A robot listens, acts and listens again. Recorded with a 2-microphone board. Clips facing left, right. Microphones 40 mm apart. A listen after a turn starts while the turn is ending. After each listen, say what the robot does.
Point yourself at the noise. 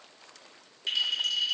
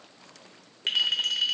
Turn 60° right.
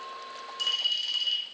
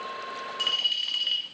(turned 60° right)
Turn 40° right.
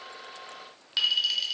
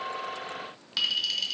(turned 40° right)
Turn 10° left.
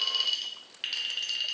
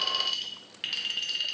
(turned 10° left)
Found it: a clink, straight ahead, under 1 m away.